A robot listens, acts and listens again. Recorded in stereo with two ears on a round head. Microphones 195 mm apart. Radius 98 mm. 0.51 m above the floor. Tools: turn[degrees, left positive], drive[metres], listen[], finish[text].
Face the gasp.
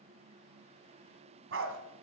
Action: listen[]
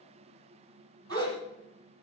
Thought: The gasp: about 20° left or 160° left.
Action: turn[20]
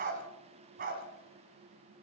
Action: listen[]
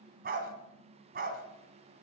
Action: finish[I heard a gasp, but can't make it out now. It was about straight ahead or 140° left.]